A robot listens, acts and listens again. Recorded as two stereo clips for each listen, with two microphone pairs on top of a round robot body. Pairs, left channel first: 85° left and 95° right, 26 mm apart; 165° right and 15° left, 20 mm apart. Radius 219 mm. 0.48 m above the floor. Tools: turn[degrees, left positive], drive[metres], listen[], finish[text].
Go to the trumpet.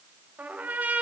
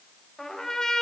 Thought: The trumpet: 105° right.
Action: turn[-105]
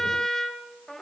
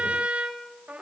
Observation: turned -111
Thought: The trumpet is now 10° left.
Action: turn[10]
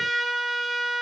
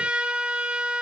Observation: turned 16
Action: drive[1.0]
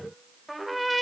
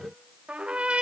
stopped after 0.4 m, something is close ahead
Action: finish[Blocked. The trumpet is further on, straight ahead.]